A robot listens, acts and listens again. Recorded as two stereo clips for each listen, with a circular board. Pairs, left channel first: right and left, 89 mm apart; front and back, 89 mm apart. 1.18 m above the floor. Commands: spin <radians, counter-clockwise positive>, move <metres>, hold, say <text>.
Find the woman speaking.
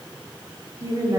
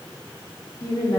spin 0.70
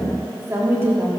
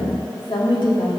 spin 0.52
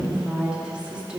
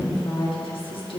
spin 0.26
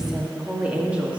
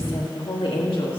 spin 0.26
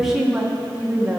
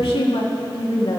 spin 0.26
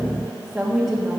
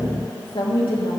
say Found it: a woman speaking, straight ahead.